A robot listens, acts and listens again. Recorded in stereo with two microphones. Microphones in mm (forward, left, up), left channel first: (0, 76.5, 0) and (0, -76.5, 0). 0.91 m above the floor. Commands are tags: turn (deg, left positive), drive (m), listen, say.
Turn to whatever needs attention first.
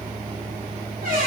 <listen/>
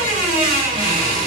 <listen/>
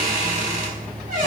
<say>I can't make out anything urgent, only a squeak.</say>